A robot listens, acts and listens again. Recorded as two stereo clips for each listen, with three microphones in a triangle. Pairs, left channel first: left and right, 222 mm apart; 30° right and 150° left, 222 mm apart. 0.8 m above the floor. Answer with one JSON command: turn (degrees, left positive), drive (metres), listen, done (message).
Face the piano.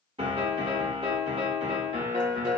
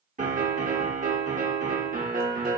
{"turn": -155}
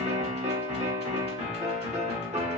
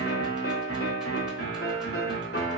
{"turn": -30}
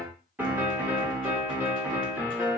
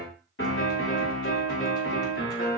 {"turn": -10}
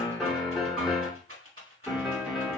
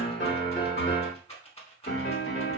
{"done": "Facing the piano."}